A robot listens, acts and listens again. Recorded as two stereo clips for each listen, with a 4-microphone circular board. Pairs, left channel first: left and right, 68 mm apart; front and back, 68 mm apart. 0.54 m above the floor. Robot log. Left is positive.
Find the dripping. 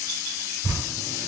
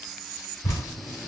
note: The dripping: 45° right.
cmd yaw -45
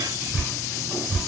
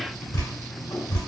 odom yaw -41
end: Facing the dripping, 1 to 2 m away.